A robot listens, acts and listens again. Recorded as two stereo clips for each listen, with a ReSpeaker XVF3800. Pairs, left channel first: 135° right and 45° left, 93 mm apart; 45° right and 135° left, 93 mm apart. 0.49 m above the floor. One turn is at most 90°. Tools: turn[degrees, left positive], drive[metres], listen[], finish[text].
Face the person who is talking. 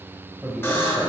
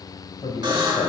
Thought: The man speaking: 25° right.
Action: turn[-25]
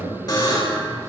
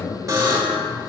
Action: finish[Found it: a man speaking, straight ahead.]